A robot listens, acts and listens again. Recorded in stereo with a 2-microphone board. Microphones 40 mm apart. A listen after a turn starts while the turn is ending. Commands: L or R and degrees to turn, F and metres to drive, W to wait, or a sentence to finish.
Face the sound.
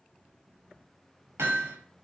R75
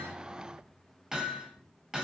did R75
Facing the hammering, over 4 m away.